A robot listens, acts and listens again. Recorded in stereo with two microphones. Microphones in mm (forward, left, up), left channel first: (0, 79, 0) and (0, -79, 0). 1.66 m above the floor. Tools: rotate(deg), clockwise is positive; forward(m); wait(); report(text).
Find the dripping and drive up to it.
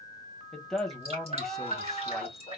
rotate(40)
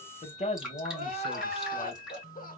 forward(1.0)
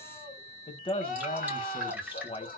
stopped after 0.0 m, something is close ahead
rotate(10)
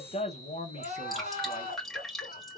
report("Blocked. The dripping is further on, straight ahead.")